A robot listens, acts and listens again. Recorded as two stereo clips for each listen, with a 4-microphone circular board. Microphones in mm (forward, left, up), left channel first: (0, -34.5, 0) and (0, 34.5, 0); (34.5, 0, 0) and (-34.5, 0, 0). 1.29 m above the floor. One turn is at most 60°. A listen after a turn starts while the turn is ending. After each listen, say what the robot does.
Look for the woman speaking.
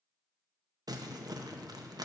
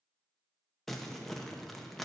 Keep listening.
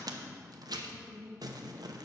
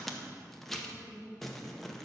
Turn 60° left.
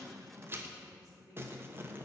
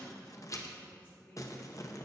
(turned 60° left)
Turn 55° left.
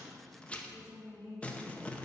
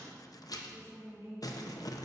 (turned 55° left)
Turn 10° right.
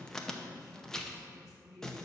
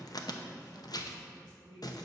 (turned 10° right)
Found it: a woman speaking, straight ahead, 2 to 4 m away.